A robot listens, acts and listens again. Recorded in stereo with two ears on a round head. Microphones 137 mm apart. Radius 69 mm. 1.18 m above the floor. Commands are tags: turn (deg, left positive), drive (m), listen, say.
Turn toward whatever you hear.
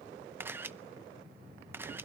<turn deg="-30"/>
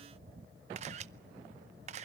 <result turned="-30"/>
<turn deg="-135"/>
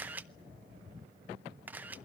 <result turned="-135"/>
<turn deg="-10"/>
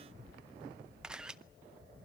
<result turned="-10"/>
<say>Facing the camera shutter.</say>